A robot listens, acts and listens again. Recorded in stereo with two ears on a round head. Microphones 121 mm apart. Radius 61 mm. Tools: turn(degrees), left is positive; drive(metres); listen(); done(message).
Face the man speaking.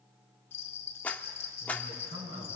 turn(degrees=-50)
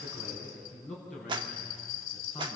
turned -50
done("Facing the man speaking, over 4 m away.")